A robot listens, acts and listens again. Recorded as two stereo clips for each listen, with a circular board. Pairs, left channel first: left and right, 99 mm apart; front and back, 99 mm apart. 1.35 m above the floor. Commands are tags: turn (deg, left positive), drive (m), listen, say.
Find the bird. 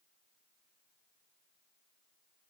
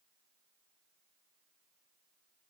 <listen/>
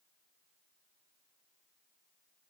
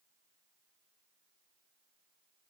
<listen/>
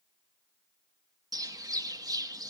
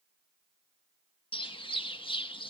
<turn deg="-35"/>
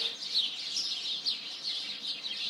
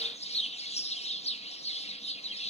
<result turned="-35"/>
<say>Found it: a bird, straight ahead.</say>